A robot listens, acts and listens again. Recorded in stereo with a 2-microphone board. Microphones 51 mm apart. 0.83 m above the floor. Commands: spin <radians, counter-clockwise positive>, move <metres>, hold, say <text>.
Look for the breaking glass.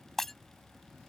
spin 0.52
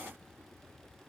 hold
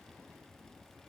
say I heard breaking glass, but can't make it out now. It was about 25° right or 145° left.